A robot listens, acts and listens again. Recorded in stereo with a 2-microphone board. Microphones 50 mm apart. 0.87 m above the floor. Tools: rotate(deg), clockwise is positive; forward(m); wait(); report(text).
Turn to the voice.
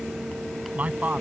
rotate(30)
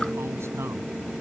wait()
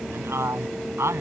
rotate(120)
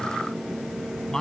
rotate(-10)
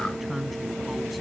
report("Found it: a man speaking, straight ahead.")